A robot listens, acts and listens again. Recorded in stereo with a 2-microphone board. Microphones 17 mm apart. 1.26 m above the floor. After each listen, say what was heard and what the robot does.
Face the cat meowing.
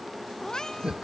The cat meowing: about 45° left or 135° left. Turn 45° left.
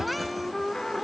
Keep listening.
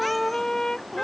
Keep listening.
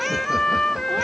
I heard a cat meowing, but can't make it out now. It was about straight ahead or 90° left.